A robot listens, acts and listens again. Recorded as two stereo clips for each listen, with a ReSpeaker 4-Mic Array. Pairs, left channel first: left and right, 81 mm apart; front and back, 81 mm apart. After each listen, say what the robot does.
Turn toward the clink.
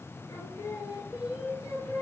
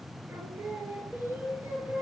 Keep listening.
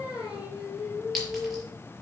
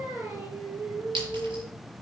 Turn 180° left.
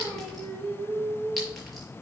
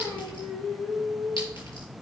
Keep listening.
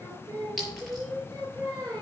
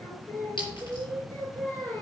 Facing the clink, over 4 m away.